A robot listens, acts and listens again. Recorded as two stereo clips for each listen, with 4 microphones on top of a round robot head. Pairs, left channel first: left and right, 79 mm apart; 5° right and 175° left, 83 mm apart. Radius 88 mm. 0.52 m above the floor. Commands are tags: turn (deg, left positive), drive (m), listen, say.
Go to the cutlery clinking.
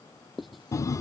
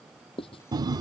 <listen/>
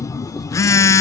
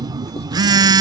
<listen/>
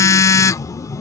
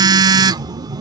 <say>I can't make out cutlery clinking, only writing and a phone buzzing.</say>